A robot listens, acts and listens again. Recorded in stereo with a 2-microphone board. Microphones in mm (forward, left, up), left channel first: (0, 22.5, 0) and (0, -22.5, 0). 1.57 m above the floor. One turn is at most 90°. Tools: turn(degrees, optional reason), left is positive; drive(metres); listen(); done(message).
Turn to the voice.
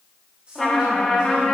turn(degrees=-25, reason="The woman speaking: about 25° right or 155° right.")
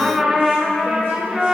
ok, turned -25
listen()
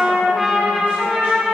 listen()
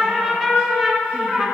done("I heard a woman speaking, but can't make it out now. It was about straight ahead or 130° right.")